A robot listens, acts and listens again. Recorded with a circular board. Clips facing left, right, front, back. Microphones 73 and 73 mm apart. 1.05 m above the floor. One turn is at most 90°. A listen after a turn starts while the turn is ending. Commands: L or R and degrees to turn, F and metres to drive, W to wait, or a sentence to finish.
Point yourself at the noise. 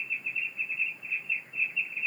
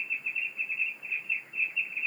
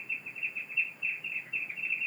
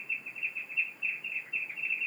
W
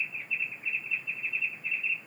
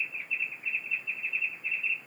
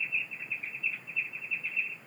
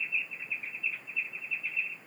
W
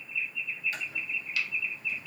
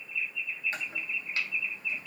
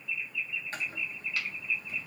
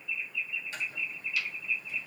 R40
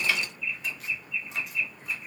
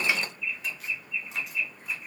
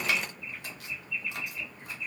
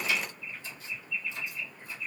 W
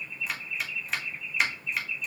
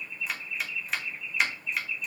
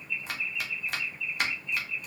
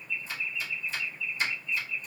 Facing the chopping.